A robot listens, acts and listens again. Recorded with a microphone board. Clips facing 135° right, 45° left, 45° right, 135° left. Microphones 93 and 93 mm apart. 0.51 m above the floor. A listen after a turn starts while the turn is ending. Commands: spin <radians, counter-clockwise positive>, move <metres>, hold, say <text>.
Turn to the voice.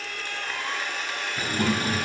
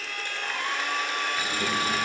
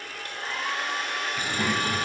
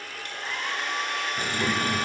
spin -2.09
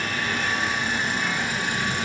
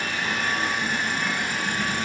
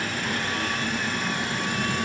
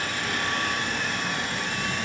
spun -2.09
hold
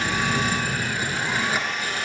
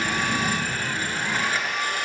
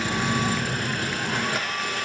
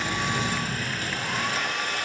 say Found it: a child speaking, straight ahead.